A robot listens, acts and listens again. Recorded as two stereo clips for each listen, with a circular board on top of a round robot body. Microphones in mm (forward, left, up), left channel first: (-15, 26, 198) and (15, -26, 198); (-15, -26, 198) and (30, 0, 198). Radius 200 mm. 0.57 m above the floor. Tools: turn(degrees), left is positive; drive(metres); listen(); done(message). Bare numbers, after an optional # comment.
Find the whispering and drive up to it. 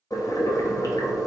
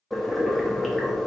listen()
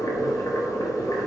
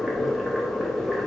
listen()
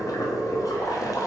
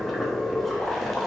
done("I can't make out whispering, only boiling.")